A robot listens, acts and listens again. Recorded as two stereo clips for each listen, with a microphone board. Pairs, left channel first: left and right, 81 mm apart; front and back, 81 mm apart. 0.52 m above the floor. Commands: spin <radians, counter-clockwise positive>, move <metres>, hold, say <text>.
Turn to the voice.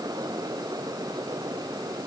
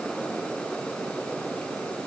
hold
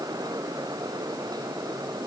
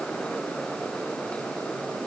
hold
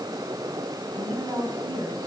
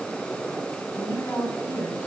spin -1.05
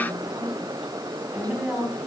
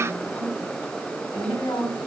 spin -0.17
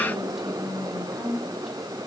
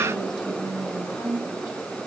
say Found it: a woman speaking, straight ahead.